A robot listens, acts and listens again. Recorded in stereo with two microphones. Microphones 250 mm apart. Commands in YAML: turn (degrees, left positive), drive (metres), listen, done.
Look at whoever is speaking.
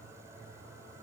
listen: true
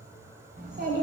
turn: -45
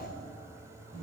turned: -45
turn: -20
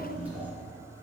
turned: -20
done: "Facing the child speaking, 2 to 4 m away."